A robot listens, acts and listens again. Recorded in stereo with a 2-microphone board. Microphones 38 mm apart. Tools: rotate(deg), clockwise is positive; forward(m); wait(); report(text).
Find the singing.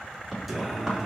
rotate(30)
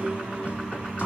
rotate(140)
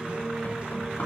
rotate(40)
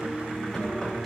report("Found it: singing, straight ahead.")